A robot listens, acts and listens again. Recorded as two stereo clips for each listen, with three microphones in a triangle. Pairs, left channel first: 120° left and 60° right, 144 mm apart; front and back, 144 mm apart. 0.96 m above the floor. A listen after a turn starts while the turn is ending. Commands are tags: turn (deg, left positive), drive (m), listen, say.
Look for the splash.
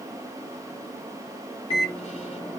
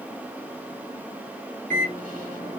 <listen/>
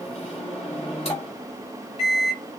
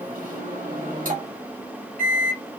<listen/>
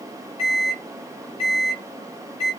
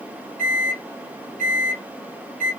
<say>I can't make out a splash, only a microwave.</say>